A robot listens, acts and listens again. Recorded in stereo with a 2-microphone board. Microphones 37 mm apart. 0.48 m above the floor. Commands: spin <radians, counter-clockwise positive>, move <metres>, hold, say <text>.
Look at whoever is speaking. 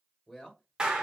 spin 0.52
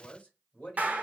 spin 2.36
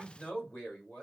spin 0.87
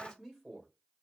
spin 0.17
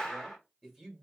say Facing the man speaking, 1 to 2 m away.